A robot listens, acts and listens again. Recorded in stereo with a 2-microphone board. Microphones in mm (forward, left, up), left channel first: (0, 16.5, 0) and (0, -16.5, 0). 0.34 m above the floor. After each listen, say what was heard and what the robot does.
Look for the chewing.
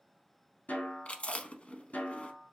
The chewing: about 45° left or 135° left. Turn 45° left.
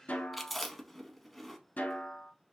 Found it: chewing, straight ahead.